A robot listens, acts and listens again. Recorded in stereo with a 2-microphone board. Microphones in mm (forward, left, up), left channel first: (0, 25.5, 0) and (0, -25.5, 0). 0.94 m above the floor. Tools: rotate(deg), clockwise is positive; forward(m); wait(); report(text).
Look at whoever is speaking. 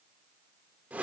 wait()
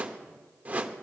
wait()
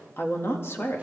rotate(-60)
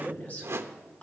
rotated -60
rotate(-30)
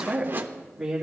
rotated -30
rotate(10)
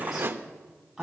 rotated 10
report("Found it: a woman speaking, straight ahead.")